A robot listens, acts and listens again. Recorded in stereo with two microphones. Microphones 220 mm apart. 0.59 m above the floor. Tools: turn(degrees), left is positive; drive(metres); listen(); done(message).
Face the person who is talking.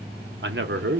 turn(degrees=-55)
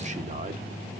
turn(degrees=-40)
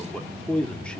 done("Facing the man speaking.")